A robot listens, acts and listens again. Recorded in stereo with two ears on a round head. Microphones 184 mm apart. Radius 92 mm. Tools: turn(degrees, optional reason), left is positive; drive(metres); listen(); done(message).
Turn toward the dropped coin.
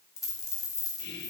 turn(degrees=15, reason="The dropped coin: about 15° left or 165° left.")
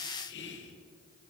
listen()
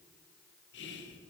done("I heard a dropped coin, but can't make it out now. It was about straight ahead or 150° left.")